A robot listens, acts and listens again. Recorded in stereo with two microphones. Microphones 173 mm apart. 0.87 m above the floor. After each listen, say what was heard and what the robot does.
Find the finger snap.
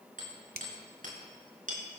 The finger snap: about 60° right or 120° right. Turn 60° right.
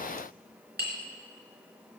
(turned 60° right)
Keep listening.
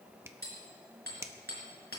So it is at 20° right. Turn 20° right.
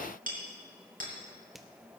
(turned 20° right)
Found it: a finger snap, straight ahead, under 1 m away.